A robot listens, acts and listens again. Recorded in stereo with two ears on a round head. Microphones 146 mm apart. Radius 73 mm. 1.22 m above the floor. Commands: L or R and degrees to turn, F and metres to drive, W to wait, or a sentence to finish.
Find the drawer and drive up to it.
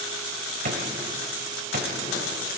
R55
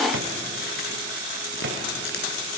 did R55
R75
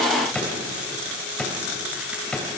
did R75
F1.0
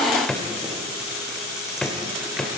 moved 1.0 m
F1.0
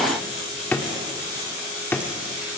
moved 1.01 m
L10
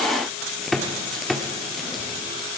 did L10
F1.0
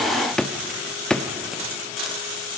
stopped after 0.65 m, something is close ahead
I am next to the drawer.